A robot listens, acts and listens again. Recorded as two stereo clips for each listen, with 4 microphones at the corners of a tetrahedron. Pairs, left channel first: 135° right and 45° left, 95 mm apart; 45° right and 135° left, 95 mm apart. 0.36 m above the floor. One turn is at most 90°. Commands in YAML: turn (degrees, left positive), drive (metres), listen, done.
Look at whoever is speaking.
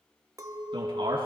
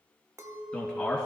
turn: 35
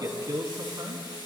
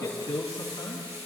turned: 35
done: "Facing the man speaking."